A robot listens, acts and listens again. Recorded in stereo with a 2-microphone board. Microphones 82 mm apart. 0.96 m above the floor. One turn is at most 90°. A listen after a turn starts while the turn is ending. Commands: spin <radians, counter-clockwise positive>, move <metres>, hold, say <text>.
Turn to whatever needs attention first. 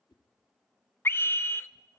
spin 0.52
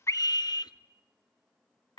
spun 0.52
spin 1.57
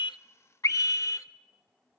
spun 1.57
spin 0.79
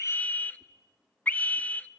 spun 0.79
spin 0.35
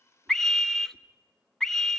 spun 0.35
say Facing the scream.